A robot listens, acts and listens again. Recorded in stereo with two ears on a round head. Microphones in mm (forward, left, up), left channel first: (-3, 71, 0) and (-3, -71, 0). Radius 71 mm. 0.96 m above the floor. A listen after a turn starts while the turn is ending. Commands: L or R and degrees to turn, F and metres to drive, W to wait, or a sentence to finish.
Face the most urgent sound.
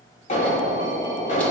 L50
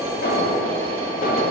L75
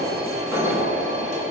R20
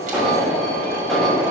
Facing the alarm, 2 to 4 m away.